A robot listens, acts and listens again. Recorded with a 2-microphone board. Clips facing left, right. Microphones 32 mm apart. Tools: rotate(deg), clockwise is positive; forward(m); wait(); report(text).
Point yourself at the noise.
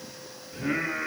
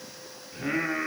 rotate(25)
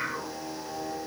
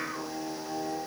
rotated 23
report("Found it: singing, straight ahead.")